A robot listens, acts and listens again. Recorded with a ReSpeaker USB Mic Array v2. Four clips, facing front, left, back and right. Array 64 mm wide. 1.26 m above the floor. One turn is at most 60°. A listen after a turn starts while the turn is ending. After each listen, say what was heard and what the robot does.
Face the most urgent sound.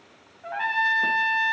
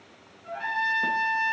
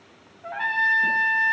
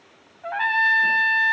Keep listening.
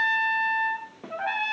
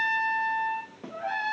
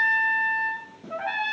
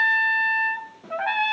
Keep listening.
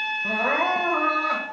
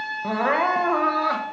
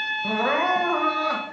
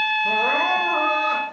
The crying: 100° left. Turn 60° left.
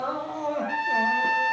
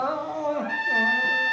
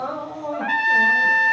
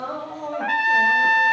The crying is now 55° left. Turn 55° left.
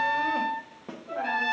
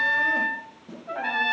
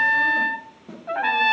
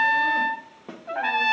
Keep listening.
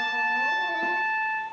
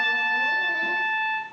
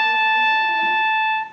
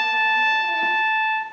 Keep listening.
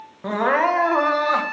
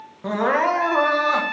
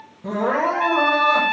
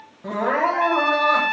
The crying is now 25° left. Turn 25° left.
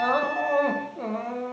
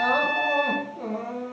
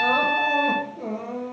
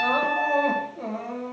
Found it: crying, straight ahead.